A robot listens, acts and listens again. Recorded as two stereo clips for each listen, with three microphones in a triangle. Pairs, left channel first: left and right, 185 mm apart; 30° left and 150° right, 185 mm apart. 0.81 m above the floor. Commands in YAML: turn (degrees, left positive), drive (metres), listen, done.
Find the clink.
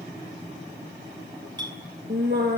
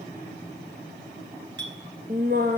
turn: -155
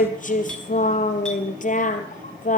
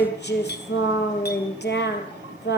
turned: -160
listen: true
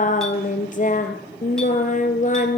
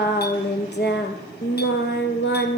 listen: true
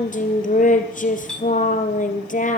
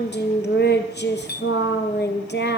done: "Facing the clink."